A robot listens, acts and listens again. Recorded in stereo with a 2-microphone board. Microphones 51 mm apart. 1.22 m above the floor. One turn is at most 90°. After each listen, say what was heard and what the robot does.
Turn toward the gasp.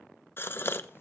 The gasp: about 45° left or 135° left. Turn 45° left.
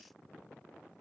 Keep listening.
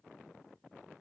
I heard a gasp, but can't make it out now. It was about straight ahead or 90° left.